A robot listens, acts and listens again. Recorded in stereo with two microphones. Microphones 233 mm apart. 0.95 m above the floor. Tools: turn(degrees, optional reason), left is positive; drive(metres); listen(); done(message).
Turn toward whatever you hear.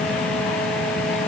listen()
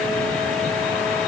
listen()
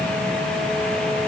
done("I can't make out anything to turn to.")